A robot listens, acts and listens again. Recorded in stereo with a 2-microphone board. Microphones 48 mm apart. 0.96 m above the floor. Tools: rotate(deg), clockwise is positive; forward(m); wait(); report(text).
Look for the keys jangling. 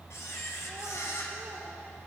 wait()
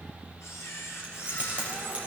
rotate(25)
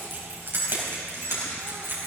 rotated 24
rotate(130)
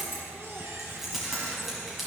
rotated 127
report("Facing the keys jangling.")